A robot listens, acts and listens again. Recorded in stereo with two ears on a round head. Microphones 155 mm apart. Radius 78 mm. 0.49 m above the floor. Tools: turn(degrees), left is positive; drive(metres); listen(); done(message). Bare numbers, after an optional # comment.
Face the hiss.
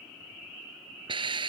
# The hiss: about 30° right or 150° right.
turn(-30)
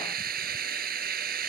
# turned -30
# So it is at 120° right.
turn(-120)
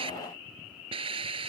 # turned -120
# The hiss is now 30° right.
turn(-30)
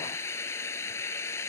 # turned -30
# The hiss is now 15° left.
turn(15)
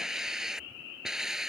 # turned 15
done("Facing the hiss.")